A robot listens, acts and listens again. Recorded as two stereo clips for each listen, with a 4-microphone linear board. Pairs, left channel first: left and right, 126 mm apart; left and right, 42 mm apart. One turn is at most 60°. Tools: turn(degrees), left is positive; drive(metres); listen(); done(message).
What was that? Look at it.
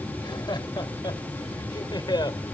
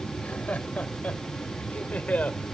turn(degrees=35)
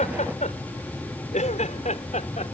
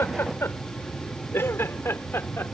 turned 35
turn(degrees=60)
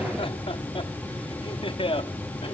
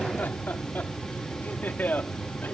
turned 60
turn(degrees=45)
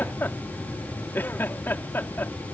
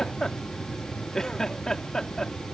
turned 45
turn(degrees=15)
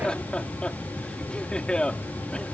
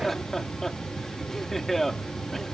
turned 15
done("Found it: laughter, straight ahead.")